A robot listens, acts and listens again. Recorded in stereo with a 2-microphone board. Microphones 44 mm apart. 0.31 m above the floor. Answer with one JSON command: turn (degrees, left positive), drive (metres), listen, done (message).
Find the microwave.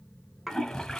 {"listen": true}
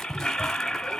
{"listen": true}
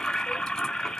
{"done": "I can't make out a microwave, only a toilet flushing."}